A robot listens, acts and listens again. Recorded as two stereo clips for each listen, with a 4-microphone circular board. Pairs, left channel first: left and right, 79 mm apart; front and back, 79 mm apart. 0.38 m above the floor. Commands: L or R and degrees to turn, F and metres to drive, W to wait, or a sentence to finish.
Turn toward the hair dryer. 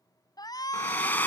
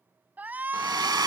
L155
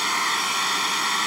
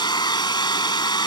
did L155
Facing the hair dryer.